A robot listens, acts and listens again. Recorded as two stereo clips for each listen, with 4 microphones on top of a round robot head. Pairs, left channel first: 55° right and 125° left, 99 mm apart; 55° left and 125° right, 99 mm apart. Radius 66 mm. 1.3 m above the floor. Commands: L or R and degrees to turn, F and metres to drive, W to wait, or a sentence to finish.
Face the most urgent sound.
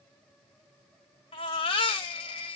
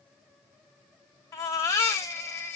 R10
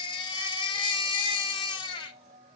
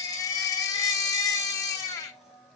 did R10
Facing the baby crying.